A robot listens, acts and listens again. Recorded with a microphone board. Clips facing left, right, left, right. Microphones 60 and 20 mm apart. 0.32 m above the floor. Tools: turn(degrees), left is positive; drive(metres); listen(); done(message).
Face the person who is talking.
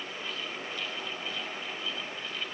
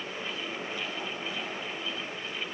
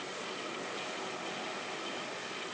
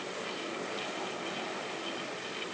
listen()
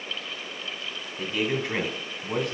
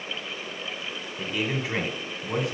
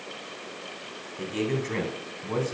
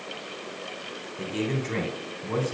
turn(degrees=30)
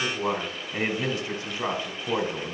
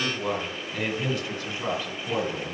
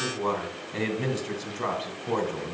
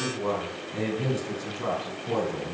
turn(degrees=150)
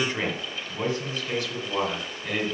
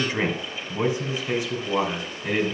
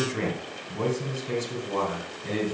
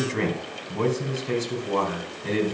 turn(degrees=-25)
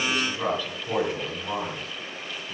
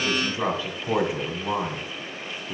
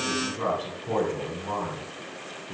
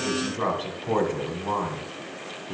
turn(degrees=-25)
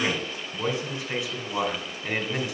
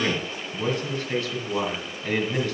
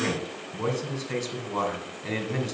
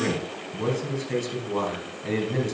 turn(degrees=10)
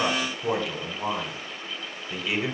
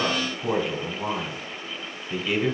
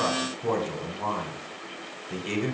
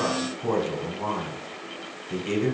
done("Found it: a man speaking, straight ahead.")